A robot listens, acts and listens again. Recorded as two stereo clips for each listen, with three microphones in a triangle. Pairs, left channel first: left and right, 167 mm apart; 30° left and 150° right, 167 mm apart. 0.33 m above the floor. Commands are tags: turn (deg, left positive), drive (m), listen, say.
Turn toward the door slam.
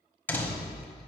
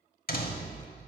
<turn deg="15"/>
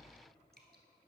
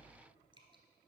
<say>Facing where the door slam came from. I can't hear it now.</say>